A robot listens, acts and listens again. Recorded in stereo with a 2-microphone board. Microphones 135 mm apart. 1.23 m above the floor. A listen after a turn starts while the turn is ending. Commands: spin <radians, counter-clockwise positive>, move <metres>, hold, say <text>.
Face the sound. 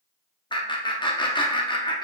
spin 0.61
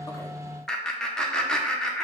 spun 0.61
say Facing the laughter.